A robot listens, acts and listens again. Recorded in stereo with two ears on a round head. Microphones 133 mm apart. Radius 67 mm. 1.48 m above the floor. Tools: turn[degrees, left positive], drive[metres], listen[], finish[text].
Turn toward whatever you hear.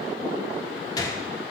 Thought: The gunshot: about 25° left or 155° left.
Action: turn[25]
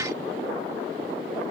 Action: listen[]
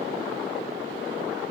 Action: finish[I heard a gunshot, but can't make it out now. It was about straight ahead or 130° left.]